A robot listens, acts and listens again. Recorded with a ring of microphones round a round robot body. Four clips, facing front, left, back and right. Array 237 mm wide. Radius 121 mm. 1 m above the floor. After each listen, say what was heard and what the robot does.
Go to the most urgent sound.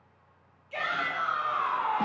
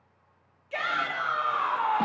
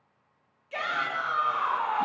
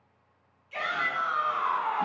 The shout: 120° left. Turn 120° left.
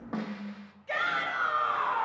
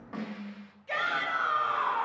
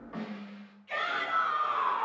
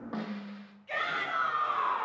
The shout is now 25° left. Turn 25° left.
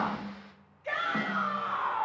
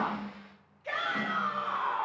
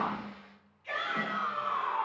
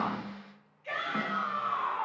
The shout is now 25° left. Turn 25° left.
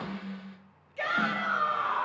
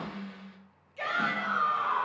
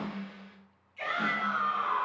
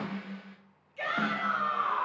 Drive 1.0 m forward.
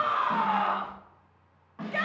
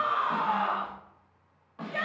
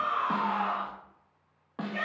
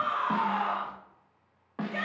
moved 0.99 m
Drive 1.0 m forward.
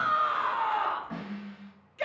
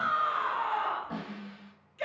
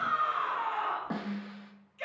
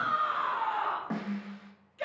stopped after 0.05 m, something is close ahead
I am next to the shout.